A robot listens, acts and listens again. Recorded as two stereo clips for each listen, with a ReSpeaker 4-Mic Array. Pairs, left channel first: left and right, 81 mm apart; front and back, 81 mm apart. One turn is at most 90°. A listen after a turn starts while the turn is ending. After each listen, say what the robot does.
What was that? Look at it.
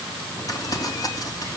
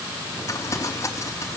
Turn 50° left.
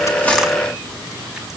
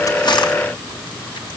Keep listening.
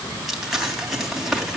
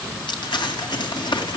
Found it: crumpling, straight ahead.